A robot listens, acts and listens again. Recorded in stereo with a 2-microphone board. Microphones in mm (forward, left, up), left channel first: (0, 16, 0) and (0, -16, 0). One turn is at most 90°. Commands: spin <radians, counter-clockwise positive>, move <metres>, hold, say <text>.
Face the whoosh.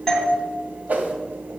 spin -0.96
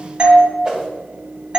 spin -0.35
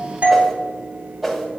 say Found it: a whoosh, straight ahead.